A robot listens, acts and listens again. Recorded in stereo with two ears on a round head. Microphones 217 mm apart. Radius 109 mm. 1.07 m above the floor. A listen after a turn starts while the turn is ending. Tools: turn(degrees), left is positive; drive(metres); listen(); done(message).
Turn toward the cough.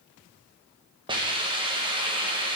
listen()
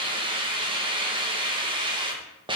listen()
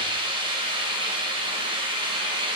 done("I can't make out a cough to turn to.")